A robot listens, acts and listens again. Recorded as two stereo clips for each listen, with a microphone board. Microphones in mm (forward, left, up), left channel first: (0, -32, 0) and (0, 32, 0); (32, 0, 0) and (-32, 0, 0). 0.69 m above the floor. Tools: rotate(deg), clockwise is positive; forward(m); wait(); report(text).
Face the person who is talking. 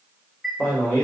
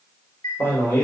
rotate(35)
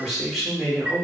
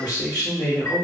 report("Found it: a man speaking, straight ahead, 1 to 2 m away.")